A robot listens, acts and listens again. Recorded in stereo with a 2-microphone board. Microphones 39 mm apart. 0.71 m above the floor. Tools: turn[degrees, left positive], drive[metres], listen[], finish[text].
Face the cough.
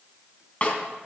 Action: listen[]
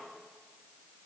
Action: listen[]
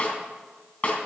Action: finish[I can't make out a cough to turn to.]